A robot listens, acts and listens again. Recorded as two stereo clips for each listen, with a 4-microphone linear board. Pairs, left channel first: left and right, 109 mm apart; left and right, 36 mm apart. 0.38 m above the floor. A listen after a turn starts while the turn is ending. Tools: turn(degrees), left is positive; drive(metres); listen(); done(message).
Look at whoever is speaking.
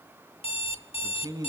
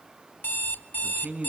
turn(degrees=-35)
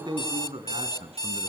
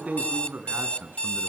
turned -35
turn(degrees=-110)
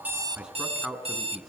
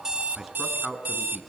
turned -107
done("Facing the man speaking, over 4 m away.")